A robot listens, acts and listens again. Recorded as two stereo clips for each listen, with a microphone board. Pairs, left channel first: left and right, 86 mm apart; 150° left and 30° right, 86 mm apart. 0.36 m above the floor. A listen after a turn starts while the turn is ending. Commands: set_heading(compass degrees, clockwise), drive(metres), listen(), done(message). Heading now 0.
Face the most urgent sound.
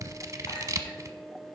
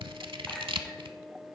listen()
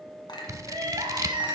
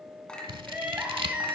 set_heading(100)
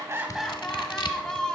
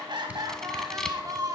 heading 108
set_heading(98)
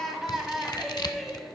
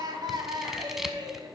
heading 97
done("Facing the crying, 1 to 2 m away.")